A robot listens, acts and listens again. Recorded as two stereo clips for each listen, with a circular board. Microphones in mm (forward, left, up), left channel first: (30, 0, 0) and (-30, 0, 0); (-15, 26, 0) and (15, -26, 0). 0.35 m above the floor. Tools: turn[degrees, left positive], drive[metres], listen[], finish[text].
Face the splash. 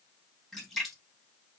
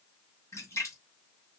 Thought: The splash: 85° left.
Action: turn[85]
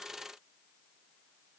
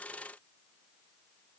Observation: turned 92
Action: finish[Facing where the splash came from. I can't hear it now.]